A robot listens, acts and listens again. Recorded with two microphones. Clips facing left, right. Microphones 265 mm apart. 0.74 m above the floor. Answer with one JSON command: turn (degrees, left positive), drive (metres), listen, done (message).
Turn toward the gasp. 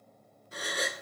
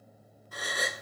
{"turn": 25}
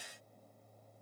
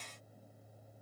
{"listen": true}
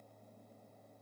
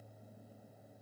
{"done": "I heard a gasp, but can't make it out now. It was about straight ahead or 130° left."}